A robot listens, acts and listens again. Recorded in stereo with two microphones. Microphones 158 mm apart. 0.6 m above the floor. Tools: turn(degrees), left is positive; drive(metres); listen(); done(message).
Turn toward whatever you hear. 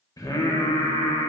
turn(degrees=20)
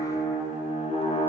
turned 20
turn(degrees=140)
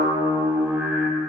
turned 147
turn(degrees=-10)
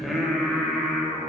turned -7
done("Found it: singing, straight ahead, 1 to 2 m away.")